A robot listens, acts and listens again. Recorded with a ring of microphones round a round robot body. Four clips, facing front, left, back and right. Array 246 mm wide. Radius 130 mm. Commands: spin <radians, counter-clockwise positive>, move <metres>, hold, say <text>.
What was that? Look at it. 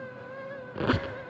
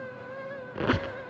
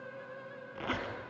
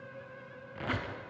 spin 0.87
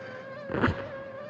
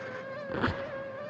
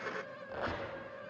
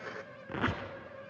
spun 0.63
spin 0.26
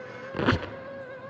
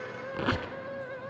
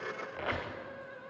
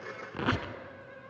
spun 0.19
say Found it: a squeak, straight ahead.